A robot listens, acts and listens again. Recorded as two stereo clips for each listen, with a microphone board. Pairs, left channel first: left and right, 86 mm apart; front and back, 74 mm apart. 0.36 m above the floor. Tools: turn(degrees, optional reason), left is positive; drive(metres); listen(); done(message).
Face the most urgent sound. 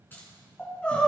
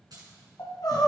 turn(degrees=15, reason="The crying: 15° left.")
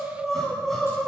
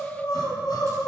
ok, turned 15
done("Facing the crying, 2 to 4 m away.")